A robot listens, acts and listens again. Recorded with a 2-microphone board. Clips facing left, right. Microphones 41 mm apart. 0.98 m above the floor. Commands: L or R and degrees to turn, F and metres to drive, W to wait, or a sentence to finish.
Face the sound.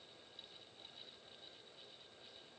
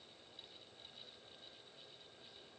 W
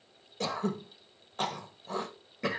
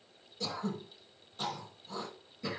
L60
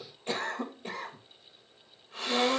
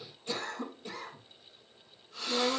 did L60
L50
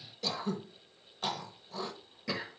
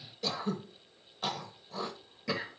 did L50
Found it: throat clearing, straight ahead, 1 to 2 m away.